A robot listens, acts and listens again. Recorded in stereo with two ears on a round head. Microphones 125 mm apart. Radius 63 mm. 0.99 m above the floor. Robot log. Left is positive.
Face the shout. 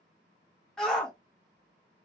cmd yaw +30
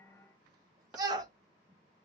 note: So it is at 25° right.
cmd yaw -25
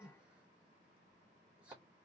cmd idle
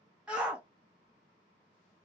note: The shout is now 10° right.
cmd yaw -10
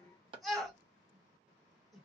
end: Found it: a shout, straight ahead.